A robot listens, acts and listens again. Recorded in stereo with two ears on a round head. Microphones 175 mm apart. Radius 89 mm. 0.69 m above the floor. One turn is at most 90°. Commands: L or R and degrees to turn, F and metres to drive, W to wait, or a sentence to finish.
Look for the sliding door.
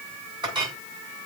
W
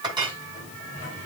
L40
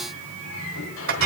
L90
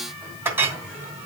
R10
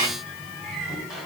Facing the sliding door, over 4 m away.